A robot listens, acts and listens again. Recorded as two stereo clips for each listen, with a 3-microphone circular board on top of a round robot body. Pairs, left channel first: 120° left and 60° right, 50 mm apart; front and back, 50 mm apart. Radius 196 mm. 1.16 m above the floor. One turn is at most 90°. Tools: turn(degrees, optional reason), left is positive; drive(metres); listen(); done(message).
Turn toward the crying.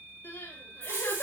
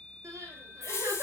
turn(degrees=90, reason="The crying: 160° left.")
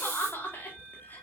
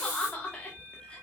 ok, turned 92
turn(degrees=70, reason="The crying is now 70° left.")
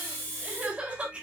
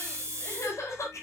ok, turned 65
done("Facing the crying, over 4 m away.")